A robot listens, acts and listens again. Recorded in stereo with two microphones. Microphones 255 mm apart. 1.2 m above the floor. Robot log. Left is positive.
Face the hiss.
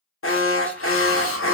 note: The hiss: about 55° left or 125° left.
cmd yaw +55
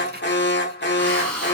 end: Found it: a hiss, straight ahead, under 1 m away.